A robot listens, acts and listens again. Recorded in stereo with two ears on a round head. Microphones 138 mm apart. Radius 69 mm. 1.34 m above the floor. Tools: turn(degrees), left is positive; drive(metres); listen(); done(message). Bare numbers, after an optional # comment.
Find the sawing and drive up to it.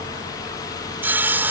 turn(-30)
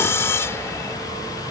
# So it is at 15° left.
turn(15)
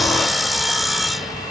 drive(1.0)
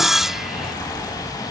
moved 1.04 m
drive(1.0)
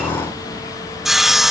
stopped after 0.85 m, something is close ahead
done("I am next to the sawing.")